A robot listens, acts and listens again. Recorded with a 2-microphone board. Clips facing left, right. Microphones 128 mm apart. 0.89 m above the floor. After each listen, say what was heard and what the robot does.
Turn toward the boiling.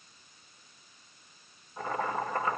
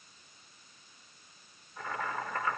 The boiling: about 30° left or 150° left. Turn 30° left.
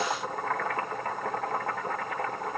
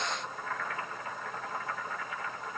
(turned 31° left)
So it is at 120° left. Turn 120° left.
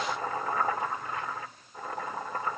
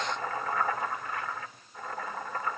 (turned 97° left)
The boiling is now 20° left. Turn 20° left.
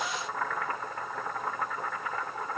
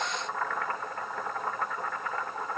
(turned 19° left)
Found it: boiling, straight ahead.